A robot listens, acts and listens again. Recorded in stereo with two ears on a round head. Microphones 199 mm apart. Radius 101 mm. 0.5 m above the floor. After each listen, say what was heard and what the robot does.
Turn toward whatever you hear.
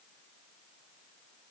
Keep listening.
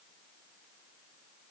Keep listening.
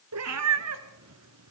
Turn 90° right.
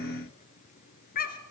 So it is at 40° left. Turn 40° left.
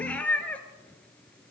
Found it: a cat meowing, straight ahead.